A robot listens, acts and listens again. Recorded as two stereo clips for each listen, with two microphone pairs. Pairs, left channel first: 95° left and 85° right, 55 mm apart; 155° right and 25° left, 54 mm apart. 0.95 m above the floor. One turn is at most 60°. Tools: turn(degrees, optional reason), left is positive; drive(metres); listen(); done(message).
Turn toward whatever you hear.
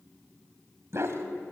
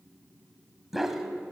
turn(degrees=-55, reason="The dog barking: 55° right.")
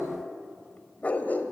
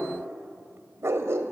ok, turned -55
turn(degrees=45, reason="The dog barking is now 45° left.")
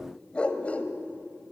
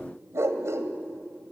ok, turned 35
turn(degrees=35, reason="The dog barking is now 35° left.")
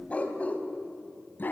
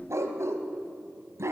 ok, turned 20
turn(degrees=45, reason="The dog barking is now 45° left.")
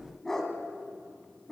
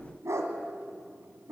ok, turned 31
turn(degrees=15, reason="The dog barking is now 15° left.")
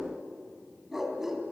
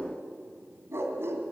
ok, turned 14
done("Found it: a dog barking, straight ahead, 2 to 4 m away.")